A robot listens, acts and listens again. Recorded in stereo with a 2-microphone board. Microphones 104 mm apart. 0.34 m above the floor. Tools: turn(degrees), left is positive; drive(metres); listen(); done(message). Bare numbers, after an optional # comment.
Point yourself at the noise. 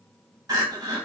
# The crying: about 40° right or 140° right.
turn(-40)
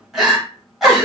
done("Found it: crying, straight ahead, 1 to 2 m away.")